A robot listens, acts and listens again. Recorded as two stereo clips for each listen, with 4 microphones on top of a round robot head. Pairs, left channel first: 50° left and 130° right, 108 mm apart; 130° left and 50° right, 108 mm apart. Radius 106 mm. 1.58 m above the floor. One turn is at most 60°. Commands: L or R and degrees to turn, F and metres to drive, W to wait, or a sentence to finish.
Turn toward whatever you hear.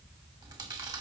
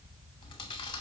L60
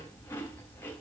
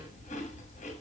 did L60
L60
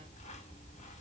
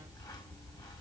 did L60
L60
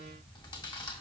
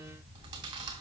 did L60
Facing the chewing.